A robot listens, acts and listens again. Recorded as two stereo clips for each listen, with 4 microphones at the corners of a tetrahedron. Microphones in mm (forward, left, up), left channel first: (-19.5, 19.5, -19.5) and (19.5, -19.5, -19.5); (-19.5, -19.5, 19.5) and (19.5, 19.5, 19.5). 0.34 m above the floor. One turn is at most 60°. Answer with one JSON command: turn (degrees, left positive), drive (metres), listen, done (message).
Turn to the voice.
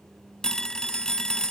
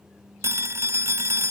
{"listen": true}
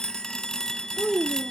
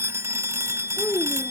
{"turn": -60}
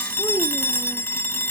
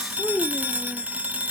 {"turn": -60}
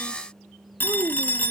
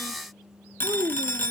{"done": "Facing the child speaking."}